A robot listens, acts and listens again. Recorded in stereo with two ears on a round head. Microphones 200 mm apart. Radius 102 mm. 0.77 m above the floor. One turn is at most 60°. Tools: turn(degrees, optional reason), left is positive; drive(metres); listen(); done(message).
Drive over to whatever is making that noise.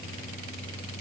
listen()
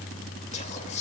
turn(degrees=30, reason="The whispering: about 30° left or 150° left.")
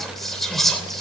drive(metres=1.0)
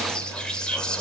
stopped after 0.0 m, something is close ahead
done("Something is in my way. I am facing the whispering but have not reached it.")